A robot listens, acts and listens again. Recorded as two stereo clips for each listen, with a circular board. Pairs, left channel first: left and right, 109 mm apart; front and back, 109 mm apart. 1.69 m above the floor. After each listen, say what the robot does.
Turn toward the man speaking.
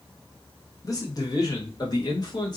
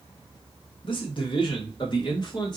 Turn 45° left.
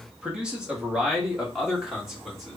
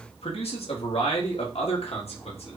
Facing the man speaking, 2 to 4 m away.